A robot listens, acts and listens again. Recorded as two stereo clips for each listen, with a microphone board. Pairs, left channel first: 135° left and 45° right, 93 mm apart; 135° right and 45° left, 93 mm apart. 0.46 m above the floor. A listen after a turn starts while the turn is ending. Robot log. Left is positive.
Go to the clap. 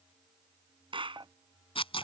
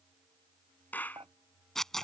note: The clap: 65° right.
cmd yaw -65
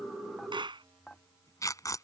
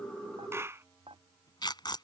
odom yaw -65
note: The clap is now 15° right.
cmd yaw -15
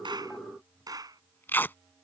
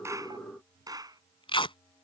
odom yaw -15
cmd fwd 1.0
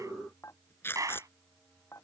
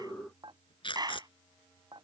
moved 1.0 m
cmd fwd 1.0
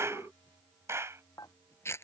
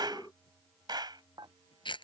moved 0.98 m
note: The clap is now 15° left.
cmd yaw +15
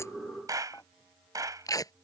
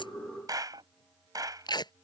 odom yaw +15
cmd fwd 1.0
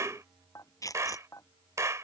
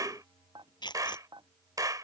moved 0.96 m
cmd fwd 1.0
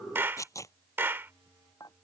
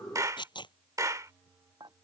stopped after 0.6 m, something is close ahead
note: The clap is now 10° left.
cmd yaw +10
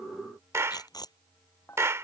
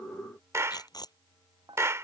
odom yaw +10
end: Arrived at the clap, straight ahead.